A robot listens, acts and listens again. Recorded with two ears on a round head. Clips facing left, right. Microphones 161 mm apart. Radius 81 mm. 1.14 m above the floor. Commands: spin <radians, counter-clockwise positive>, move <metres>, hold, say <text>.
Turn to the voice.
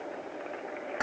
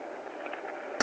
hold
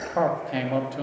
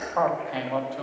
spin 0.44
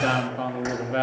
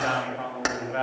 spin 2.27
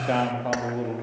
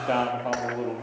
say Found it: a man speaking, straight ahead.